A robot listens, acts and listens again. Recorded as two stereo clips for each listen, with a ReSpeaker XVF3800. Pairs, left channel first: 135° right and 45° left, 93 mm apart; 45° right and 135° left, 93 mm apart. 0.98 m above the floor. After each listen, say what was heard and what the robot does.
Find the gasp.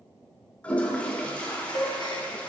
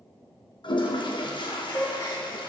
The gasp: 100° right. Turn 100° right.
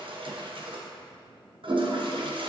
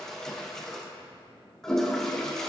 I heard a gasp from this way, but can't make it out now.